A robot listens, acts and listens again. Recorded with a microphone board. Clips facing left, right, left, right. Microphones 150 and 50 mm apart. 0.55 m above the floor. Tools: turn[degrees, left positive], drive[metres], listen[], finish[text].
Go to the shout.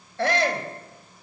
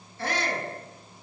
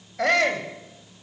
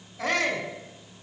Thought: The shout: about 70° left or 110° left.
Action: turn[70]
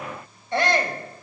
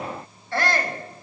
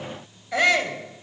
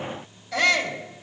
Thought: So it is at 20° left.
Action: turn[20]
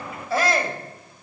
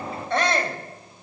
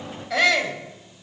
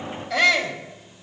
Action: drive[1.0]
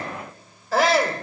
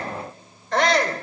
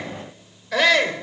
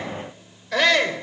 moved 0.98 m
Action: drive[1.0]
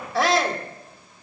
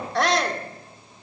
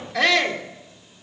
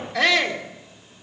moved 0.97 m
Action: drive[1.0]
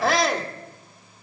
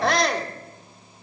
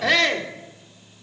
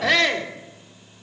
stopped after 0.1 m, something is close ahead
Action: finish[Arrived at the shout, straight ahead.]